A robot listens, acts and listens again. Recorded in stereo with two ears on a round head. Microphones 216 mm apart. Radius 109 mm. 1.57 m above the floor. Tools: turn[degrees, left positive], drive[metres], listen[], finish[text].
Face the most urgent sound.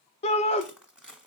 Thought: The shout: about 25° left or 155° left.
Action: turn[25]
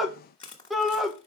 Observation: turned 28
Action: finish[Facing the shout, 1 to 2 m away.]